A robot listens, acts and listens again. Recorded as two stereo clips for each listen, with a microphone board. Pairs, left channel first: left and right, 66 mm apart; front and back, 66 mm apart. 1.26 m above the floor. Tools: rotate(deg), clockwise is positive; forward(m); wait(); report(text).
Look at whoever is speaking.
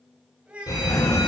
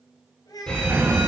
rotate(15)
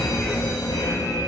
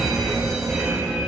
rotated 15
wait()
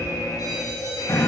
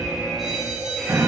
wait()
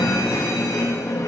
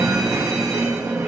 report("I heard a child speaking from this way, but can't make it out now.")